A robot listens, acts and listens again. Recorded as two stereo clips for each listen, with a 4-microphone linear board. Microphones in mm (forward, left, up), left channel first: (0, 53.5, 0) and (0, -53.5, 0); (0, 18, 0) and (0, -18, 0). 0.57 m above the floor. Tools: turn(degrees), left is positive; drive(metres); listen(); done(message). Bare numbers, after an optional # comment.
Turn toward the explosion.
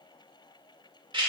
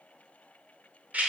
listen()
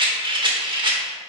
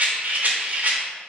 listen()
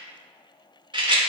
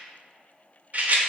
done("I can't make out an explosion to turn to.")